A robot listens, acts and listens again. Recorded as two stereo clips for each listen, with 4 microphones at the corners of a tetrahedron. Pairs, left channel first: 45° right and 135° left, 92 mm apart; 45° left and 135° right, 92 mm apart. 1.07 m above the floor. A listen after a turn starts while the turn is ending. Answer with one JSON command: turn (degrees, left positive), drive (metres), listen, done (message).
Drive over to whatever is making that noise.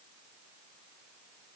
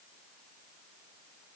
{"listen": true}
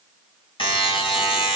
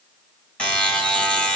{"turn": -35}
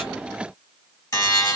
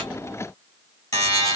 {"drive": 1.0}
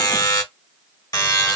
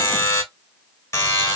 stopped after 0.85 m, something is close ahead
{"done": "Arrived at the buzzer, straight ahead."}